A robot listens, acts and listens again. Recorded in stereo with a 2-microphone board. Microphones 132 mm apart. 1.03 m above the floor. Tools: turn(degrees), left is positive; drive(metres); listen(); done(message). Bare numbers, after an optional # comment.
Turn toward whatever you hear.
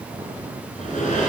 # The sliding door: about 75° left or 105° left.
turn(75)
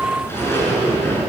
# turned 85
# So it is at 20° left.
turn(20)
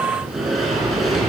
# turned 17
done("Found it: a sliding door, straight ahead.")